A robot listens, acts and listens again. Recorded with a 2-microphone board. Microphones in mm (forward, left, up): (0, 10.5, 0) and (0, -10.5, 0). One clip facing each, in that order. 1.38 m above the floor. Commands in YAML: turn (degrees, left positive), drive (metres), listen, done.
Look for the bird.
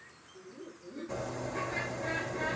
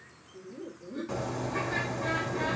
turn: -40
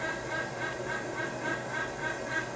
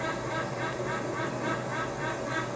done: "Found it: a bird, straight ahead."